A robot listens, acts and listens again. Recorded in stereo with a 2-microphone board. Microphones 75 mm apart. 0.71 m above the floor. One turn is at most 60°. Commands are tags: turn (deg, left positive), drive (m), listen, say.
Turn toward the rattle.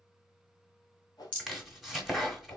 <turn deg="20"/>
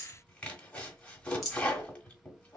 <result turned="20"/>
<say>Facing the rattle, 1 to 2 m away.</say>